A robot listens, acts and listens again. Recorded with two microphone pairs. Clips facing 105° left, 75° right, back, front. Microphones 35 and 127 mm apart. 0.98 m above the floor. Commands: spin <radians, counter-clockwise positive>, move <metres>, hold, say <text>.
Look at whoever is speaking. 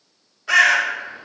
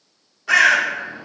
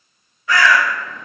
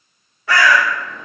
hold
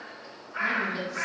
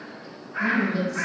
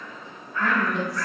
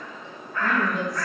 spin 3.05
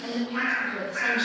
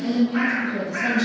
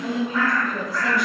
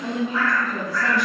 spin 1.13
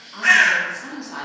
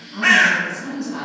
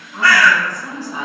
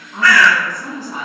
spin 0.70
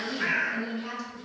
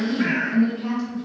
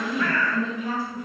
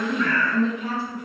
spin 0.17
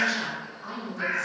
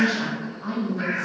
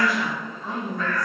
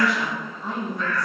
say Found it: a woman speaking, straight ahead.